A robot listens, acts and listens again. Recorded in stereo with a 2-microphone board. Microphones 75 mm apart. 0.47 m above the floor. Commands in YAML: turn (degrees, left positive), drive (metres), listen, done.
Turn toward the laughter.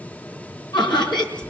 turn: 75
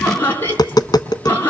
turn: 30
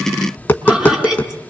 done: "Found it: laughter, straight ahead, over 4 m away."